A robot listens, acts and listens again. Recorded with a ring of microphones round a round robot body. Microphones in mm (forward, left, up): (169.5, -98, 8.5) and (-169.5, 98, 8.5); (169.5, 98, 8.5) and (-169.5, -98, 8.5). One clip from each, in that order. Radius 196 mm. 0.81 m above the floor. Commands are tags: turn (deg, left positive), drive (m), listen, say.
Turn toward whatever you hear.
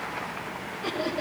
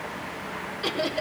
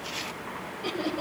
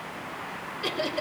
<turn deg="-165"/>
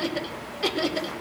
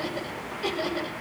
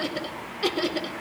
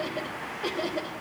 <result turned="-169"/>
<turn deg="30"/>
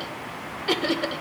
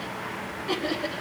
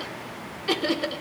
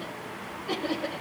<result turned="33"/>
<turn deg="15"/>
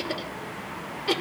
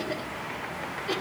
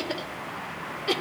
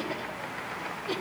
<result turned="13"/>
<say>Found it: laughter, straight ahead.</say>